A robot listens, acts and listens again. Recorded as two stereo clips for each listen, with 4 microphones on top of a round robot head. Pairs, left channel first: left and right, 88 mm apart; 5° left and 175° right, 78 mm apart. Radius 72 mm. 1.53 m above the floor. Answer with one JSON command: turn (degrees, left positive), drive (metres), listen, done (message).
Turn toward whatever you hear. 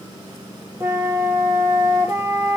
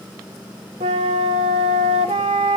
{"turn": -165}
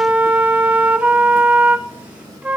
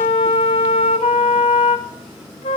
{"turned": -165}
{"turn": -15}
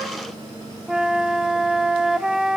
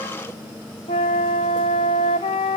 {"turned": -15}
{"turn": -10}
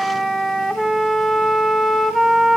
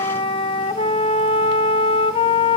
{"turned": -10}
{"done": "Found it: a flute, straight ahead, under 1 m away."}